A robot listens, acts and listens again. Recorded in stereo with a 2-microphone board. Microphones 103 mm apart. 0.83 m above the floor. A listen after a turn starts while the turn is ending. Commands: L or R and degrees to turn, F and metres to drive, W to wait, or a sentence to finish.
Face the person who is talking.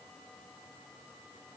W
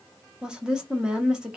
R30
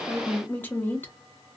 L20
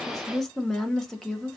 Found it: a woman speaking, straight ahead.